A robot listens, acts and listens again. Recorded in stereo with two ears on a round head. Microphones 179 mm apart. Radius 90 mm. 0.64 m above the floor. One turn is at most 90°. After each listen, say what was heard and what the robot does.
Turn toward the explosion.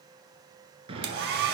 The explosion: about 30° right or 150° right. Turn 30° right.
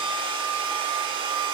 Keep listening.
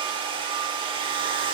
I heard an explosion, but can't make it out now. It was about straight ahead or 120° right.